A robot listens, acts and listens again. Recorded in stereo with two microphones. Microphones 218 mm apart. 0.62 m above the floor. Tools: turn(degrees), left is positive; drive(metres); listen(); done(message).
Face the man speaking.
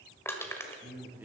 turn(degrees=-30)
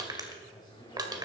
turn(degrees=20)
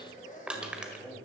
done("Found it: a man speaking, straight ahead.")